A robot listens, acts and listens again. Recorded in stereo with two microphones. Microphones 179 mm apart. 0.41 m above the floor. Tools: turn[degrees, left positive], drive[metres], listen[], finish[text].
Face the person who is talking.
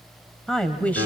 Action: turn[30]
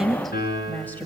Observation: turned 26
Action: turn[30]
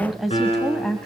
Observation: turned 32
Action: turn[30]
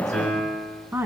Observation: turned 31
Thought: So it is at 15° right.
Action: turn[-15]
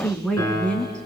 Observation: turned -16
Action: finish[Found it: a woman speaking, straight ahead, 2 to 4 m away.]